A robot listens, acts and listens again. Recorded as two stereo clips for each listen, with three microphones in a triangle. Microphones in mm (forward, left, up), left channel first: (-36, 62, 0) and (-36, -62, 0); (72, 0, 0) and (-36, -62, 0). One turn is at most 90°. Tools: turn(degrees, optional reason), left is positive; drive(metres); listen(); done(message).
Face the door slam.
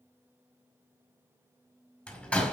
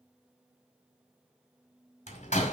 turn(degrees=10, reason="The door slam: 10° left.")
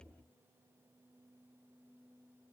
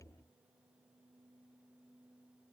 done("I heard a door slam from this way, but can't make it out now.")